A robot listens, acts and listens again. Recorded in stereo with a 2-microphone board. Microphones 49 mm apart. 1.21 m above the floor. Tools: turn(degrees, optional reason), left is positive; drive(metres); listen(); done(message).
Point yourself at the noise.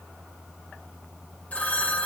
turn(degrees=30, reason="The phone ringing: about 30° left or 150° left.")
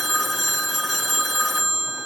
done("Found it: a phone ringing, straight ahead.")